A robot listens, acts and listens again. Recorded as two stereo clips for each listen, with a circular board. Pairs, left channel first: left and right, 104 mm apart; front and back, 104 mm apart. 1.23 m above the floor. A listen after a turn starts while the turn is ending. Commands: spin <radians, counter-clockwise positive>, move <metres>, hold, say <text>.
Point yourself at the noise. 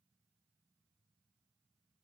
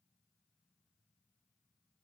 hold
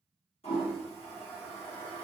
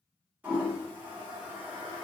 spin 1.83
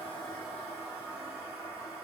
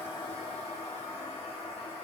spin -0.17
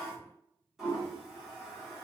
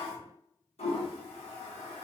say Facing the toilet flushing.